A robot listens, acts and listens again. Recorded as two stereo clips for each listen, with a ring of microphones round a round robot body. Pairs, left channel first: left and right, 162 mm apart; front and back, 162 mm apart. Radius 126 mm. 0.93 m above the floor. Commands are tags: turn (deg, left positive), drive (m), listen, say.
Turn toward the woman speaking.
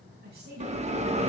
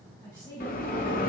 <turn deg="-75"/>
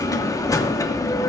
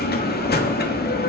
<listen/>
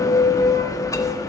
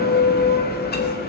<listen/>
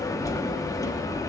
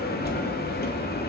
<say>I heard a woman speaking from this way, but can't make it out now.</say>